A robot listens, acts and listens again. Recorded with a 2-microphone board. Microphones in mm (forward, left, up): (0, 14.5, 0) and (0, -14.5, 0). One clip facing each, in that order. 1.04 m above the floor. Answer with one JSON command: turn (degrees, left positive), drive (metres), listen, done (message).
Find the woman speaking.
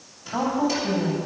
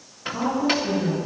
{"turn": 70}
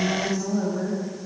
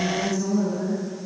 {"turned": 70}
{"turn": 35}
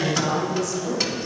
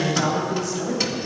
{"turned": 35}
{"turn": -25}
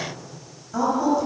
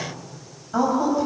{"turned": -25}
{"turn": -25}
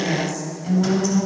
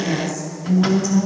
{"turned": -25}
{"done": "Facing the woman speaking, over 4 m away."}